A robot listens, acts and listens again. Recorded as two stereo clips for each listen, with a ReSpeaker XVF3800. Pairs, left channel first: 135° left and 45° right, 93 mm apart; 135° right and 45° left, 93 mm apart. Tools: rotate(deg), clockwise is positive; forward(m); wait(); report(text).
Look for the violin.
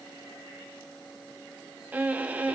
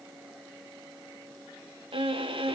rotate(-30)
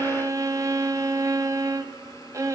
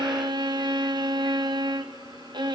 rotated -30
rotate(-10)
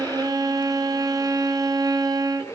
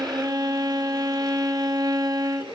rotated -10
report("Facing the violin.")